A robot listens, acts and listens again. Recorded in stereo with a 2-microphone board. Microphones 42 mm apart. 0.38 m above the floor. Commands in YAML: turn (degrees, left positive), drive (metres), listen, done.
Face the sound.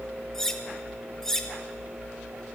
turn: 30
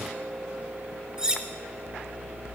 turn: -20
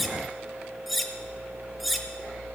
done: "Found it: cutlery clinking, straight ahead, 1 to 2 m away."